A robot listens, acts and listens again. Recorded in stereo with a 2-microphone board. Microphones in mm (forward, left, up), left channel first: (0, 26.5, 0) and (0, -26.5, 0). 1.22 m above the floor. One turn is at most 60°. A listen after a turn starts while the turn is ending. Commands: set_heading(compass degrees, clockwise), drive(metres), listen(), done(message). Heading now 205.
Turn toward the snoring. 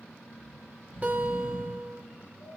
set_heading(145)
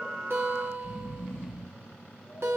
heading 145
set_heading(120)
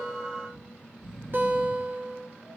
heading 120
done("Found it: snoring, straight ahead.")